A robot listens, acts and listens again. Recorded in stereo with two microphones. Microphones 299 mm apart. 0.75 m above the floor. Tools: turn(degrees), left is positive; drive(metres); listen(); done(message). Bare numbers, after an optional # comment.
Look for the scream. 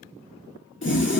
listen()
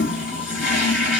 listen()
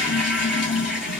done("I can't make out a scream, only a toilet flushing.")